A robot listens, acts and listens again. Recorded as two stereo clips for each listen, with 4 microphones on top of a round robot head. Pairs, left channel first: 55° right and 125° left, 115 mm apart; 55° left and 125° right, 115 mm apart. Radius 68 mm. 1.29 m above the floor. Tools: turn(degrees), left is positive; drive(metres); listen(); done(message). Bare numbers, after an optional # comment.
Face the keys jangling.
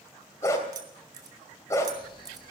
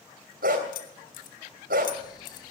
# The keys jangling: 65° left.
turn(65)
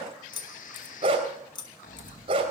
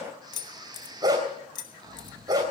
done("Found it: keys jangling, straight ahead.")